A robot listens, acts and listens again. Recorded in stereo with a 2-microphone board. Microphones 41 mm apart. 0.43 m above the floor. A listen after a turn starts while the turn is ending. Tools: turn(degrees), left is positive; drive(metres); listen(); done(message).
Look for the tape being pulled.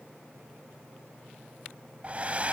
listen()
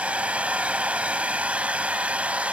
listen()
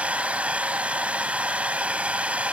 done("I can't make out tape being pulled to turn to.")